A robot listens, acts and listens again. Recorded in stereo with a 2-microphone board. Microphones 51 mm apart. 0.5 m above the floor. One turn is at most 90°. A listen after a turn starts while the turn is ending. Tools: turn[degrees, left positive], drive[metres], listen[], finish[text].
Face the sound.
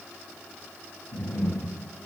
Action: turn[90]
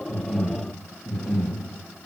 Thought: So it is at 10° right.
Action: turn[-10]
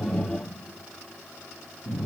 Action: finish[Facing the breathing.]